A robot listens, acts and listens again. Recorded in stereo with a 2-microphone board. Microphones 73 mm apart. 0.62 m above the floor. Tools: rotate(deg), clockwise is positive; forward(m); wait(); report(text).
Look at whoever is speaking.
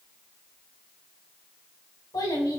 rotate(-60)
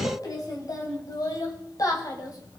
rotate(-60)
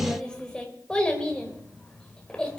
rotate(-15)
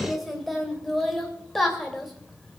report("Facing the child speaking, 2 to 4 m away.")